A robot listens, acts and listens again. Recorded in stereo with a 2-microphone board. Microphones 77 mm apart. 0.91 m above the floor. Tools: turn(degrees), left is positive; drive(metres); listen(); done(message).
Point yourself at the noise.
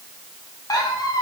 turn(degrees=55)
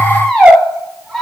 done("Found it: a squeak, straight ahead, 1 to 2 m away.")